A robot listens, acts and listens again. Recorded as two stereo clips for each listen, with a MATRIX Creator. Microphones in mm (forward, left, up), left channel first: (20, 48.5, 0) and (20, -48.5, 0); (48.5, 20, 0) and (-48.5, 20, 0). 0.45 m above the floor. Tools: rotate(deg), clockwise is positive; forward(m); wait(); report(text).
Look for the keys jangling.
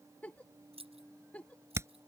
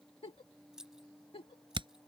rotate(95)
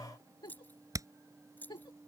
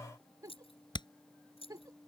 rotate(-20)
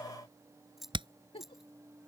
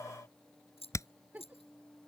report("Found it: keys jangling, straight ahead.")